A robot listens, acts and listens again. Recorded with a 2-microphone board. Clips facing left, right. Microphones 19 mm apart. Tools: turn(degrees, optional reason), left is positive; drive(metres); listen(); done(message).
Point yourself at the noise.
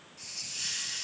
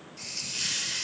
turn(degrees=-90)
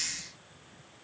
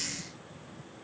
turn(degrees=10, reason="So it is at 10° left.")
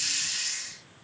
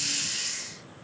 done("Found it: a hiss, straight ahead, 1 to 2 m away.")